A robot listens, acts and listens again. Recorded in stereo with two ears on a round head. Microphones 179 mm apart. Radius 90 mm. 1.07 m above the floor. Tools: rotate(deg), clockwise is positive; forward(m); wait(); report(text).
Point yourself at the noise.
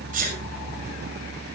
rotate(45)
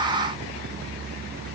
wait()
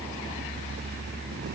report("I heard a sneeze, but can't make it out now. It was about straight ahead or 90° right.")